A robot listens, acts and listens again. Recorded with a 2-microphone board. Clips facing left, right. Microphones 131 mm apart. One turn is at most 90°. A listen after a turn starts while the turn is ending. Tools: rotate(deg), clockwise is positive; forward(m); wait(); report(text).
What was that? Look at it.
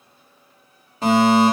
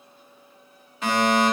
rotate(-35)
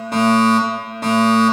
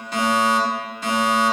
rotate(-90)
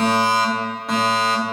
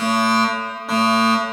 report("Found it: a fire alarm, straight ahead.")